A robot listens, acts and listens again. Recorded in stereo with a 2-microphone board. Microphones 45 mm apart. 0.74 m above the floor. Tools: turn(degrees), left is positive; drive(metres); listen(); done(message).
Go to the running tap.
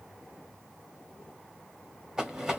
listen()
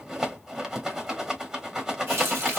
turn(degrees=-70)
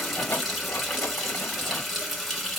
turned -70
drive(metres=1.0)
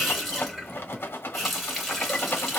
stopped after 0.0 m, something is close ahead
done("Blocked. The running tap is further on, straight ahead.")